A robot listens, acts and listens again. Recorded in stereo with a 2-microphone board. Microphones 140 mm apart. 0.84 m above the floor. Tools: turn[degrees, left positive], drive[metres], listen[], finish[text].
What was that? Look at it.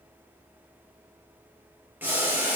Action: turn[-30]
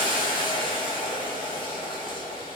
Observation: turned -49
Thought: So it is at 35° left.
Action: turn[35]
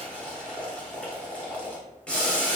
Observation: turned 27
Thought: The boiling is now 10° left.
Action: turn[10]
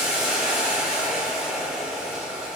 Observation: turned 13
Action: finish[Facing the boiling, under 1 m away.]